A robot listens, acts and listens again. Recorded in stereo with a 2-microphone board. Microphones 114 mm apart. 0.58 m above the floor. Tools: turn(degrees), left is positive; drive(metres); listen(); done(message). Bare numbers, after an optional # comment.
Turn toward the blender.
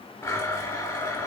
# The blender: about 25° left or 155° left.
turn(25)
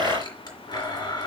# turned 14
# So it is at 140° left.
turn(140)
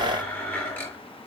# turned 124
# The blender is now 20° left.
turn(20)
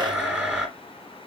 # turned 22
done("Found it: a blender, straight ahead.")